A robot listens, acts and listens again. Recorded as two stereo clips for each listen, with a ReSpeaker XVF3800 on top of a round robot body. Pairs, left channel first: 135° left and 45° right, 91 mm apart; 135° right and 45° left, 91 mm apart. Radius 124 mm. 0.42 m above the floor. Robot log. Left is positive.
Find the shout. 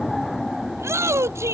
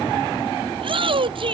note: The shout: 15° left.
cmd yaw +15
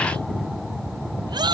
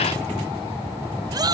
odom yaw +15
end: Found it: a shout, straight ahead.